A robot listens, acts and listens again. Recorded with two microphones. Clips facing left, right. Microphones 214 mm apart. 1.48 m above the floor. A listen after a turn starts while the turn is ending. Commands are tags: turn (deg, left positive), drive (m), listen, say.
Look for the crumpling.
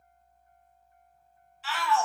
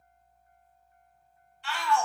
<listen/>
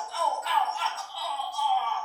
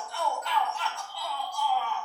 <listen/>
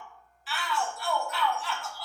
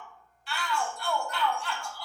<say>I can't make out crumpling, only a shout.</say>